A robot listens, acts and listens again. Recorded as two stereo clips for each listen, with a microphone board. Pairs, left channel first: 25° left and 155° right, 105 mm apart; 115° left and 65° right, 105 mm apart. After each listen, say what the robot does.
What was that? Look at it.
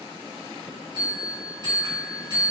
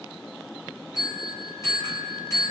Turn 165° left.
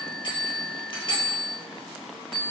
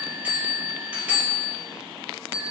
Facing the bell, 1 to 2 m away.